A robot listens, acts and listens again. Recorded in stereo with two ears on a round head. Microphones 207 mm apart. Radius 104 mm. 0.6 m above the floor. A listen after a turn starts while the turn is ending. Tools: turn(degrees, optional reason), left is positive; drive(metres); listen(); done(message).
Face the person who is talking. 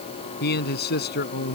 turn(degrees=50, reason="The man speaking: about 50° left or 130° left.")
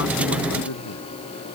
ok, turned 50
turn(degrees=80, reason="So it is at 80° left.")
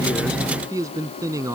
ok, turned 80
turn(degrees=-15, reason="The man speaking is now 15° right.")
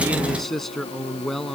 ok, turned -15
done("Found it: a man speaking, straight ahead.")